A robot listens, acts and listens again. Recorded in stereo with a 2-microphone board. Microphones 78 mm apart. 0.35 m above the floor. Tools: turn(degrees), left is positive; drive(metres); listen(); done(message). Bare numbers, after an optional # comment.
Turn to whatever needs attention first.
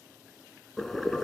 listen()
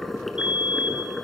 turn(-30)
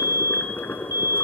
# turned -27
# So it is at 140° right.
turn(-140)
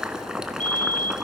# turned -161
# The fire alarm is now 25° left.
turn(25)
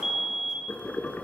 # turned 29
done("Facing the fire alarm, 2 to 4 m away.")